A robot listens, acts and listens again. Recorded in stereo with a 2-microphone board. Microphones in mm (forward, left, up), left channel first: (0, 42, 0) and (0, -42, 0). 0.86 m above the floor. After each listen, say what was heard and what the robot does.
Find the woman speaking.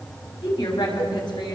The woman speaking: about 55° left or 125° left. Turn 55° left.
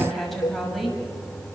Facing the woman speaking, over 4 m away.